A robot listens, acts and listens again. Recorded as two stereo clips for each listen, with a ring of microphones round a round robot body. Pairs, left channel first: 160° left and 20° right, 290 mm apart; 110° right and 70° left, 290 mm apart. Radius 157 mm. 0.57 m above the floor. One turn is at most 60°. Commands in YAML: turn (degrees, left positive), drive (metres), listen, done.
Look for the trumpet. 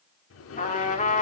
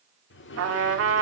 turn: 60
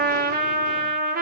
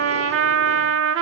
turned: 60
turn: 35
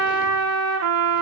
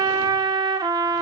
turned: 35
done: "Facing the trumpet, 1 to 2 m away."